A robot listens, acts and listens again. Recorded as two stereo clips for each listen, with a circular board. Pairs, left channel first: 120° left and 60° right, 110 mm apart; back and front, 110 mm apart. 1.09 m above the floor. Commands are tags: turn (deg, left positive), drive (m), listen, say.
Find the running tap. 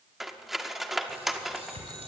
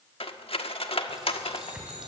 <turn deg="-85"/>
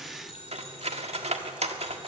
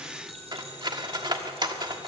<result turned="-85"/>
<listen/>
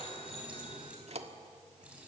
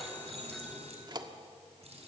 <turn deg="20"/>
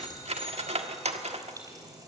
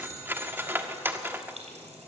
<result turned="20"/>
<say>Facing the running tap.</say>